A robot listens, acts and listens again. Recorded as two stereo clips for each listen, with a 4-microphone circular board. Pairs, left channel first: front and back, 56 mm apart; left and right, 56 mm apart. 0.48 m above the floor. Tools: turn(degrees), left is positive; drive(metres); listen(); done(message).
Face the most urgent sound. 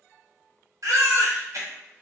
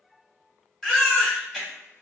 turn(degrees=170)
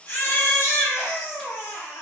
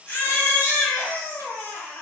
turn(degrees=35)
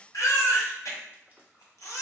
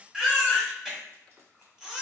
turn(degrees=-10)
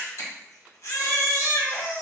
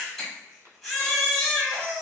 done("Found it: a baby crying, straight ahead, 1 to 2 m away.")